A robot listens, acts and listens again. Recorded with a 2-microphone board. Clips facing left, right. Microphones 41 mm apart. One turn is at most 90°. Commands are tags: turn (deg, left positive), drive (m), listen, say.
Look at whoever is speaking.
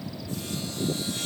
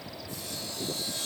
<listen/>
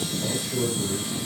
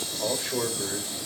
<turn deg="-50"/>
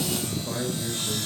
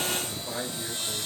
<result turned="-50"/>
<say>Facing the man speaking.</say>